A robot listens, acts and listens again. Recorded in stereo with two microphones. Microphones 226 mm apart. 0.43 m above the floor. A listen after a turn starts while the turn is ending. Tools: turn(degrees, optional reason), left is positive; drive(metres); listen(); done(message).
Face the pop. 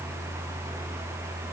listen()
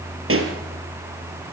turn(degrees=-75, reason="The pop: about 75° right or 105° right.")
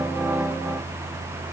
listen()
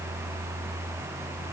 done("I heard a pop, but can't make it out now. It was about straight ahead or 30° right.")